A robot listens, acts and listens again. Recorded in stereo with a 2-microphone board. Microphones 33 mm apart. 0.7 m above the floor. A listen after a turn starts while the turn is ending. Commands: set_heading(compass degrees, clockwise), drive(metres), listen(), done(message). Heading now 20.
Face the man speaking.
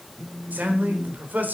set_heading(90)
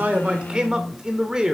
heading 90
set_heading(110)
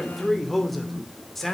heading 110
set_heading(100)
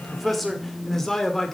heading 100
set_heading(85)
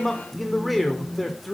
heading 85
done("Facing the man speaking.")